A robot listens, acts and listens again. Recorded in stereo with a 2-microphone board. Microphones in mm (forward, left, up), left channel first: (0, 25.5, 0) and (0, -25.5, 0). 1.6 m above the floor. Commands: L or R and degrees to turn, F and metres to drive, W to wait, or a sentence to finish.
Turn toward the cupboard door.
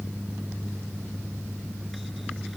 W
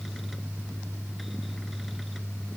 W
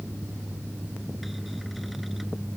I can't make out a cupboard door to turn to.